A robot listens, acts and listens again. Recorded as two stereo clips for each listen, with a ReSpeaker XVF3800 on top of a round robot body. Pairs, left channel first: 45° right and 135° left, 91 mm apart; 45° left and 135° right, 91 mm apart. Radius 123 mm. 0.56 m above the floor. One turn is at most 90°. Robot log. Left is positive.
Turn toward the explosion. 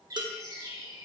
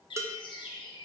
cmd idle
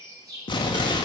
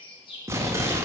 note: The explosion: 75° right.
cmd yaw -75
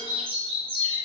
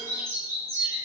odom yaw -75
end: I heard an explosion from this way, but can't make it out now.